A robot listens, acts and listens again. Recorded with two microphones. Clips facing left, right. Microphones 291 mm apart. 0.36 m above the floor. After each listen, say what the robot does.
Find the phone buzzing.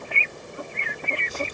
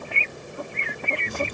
Keep listening.
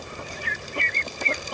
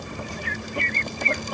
Keep listening.
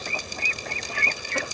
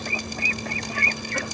I can't make out a phone buzzing, only dripping.